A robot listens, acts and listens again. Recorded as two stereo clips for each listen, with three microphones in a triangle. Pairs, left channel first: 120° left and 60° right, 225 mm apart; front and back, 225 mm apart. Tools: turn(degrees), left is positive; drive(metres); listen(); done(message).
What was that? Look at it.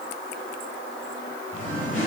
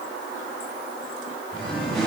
turn(degrees=65)
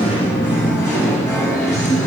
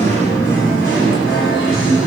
turn(degrees=30)
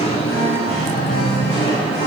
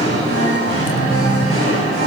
done("Found it: singing, straight ahead.")